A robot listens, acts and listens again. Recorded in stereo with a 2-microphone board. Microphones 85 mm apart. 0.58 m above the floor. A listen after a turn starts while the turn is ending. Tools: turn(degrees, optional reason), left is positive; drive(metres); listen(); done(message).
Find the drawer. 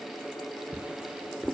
turn(degrees=-30)
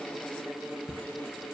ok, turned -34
turn(degrees=20, reason="So it is at 20° left.")
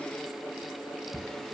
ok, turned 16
done("Found it: a drawer, straight ahead, under 1 m away.")